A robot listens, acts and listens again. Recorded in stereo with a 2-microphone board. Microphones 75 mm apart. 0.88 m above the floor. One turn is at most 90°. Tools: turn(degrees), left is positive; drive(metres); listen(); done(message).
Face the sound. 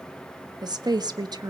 turn(degrees=-65)
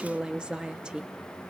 turn(degrees=-10)
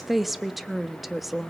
done("Facing the woman speaking, 1 to 2 m away.")